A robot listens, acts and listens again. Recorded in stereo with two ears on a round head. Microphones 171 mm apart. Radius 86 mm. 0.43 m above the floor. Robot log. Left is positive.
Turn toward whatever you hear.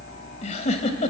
note: The giggle: about 35° left or 145° left.
cmd yaw +35
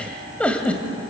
end: Found it: a giggle, straight ahead.